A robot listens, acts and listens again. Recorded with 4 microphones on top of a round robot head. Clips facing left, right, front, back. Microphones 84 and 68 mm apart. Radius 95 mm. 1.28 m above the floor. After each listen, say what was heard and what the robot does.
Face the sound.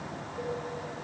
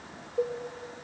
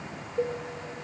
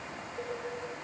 The cowbell: 55° right. Turn 55° right.
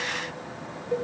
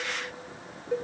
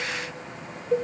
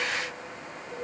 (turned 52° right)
Found it: a cowbell, straight ahead, over 4 m away.